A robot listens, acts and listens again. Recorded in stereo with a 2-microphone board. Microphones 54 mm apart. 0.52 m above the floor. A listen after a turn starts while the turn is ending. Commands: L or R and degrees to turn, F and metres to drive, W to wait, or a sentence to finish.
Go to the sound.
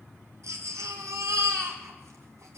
R70
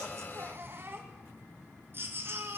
R45
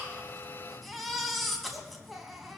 F1.0
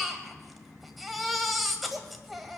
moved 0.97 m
F1.0
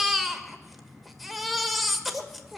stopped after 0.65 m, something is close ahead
Arrived at the baby crying, straight ahead.